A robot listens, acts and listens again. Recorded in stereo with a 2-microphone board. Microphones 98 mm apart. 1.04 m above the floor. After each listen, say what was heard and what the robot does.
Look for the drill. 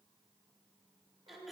Keep listening.
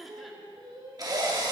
The drill: about 40° right or 140° right. Turn 40° right.
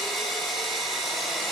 Found it: a drill, straight ahead.